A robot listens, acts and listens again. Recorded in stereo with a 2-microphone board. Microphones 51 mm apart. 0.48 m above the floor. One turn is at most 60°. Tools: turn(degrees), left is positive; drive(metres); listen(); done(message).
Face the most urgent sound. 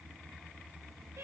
listen()
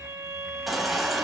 turn(degrees=30)
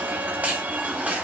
turn(degrees=-30)
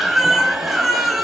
done("Facing the baby crying.")